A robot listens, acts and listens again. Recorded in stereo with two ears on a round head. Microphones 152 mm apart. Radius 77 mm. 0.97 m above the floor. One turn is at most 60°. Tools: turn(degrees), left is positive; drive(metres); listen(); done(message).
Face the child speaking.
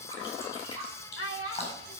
turn(degrees=60)
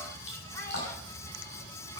turn(degrees=30)
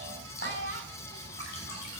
turn(degrees=-50)
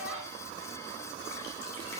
listen()
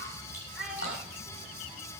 done("Facing the child speaking.")